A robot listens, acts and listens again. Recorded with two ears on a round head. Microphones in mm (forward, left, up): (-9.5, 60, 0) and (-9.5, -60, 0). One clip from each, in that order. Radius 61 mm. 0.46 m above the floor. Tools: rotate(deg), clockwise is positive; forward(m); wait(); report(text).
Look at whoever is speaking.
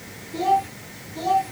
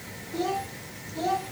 rotate(-30)
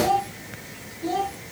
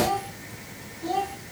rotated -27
report("Facing the child speaking, 2 to 4 m away.")